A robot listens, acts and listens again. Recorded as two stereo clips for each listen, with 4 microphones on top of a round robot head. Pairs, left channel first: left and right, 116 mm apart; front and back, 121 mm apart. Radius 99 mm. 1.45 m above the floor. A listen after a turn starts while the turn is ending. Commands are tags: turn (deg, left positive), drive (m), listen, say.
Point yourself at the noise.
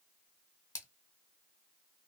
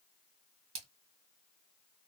<turn deg="150"/>
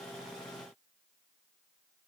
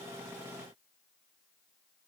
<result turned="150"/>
<say>I heard a splash from this way, but can't make it out now.</say>